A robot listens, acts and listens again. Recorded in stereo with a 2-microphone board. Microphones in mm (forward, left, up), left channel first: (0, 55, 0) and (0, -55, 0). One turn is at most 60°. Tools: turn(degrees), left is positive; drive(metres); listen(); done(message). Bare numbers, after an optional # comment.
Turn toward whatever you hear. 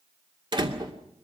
# The door slam: about 45° right or 135° right.
turn(-45)
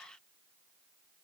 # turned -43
listen()
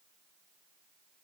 done("I heard a door slam, but can't make it out now. It was about 5° right or 90° right.")